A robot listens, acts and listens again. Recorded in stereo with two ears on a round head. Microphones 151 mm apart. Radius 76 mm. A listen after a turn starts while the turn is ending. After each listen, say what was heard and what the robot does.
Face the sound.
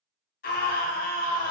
The scream: about 55° left or 125° left. Turn 55° left.
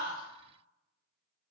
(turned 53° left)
Keep listening.
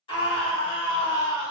So it is at 35° left. Turn 35° left.
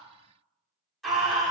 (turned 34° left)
Found it: a scream, straight ahead, 1 to 2 m away.